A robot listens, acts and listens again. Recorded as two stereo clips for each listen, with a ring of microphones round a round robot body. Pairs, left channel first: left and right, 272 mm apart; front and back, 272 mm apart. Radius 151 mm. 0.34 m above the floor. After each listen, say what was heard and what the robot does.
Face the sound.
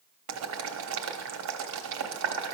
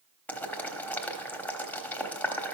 The boiling: 85° right. Turn 85° right.
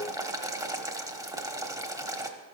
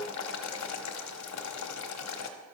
The boiling is now 15° right. Turn 15° right.
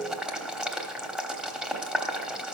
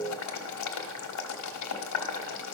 Facing the boiling, 1 to 2 m away.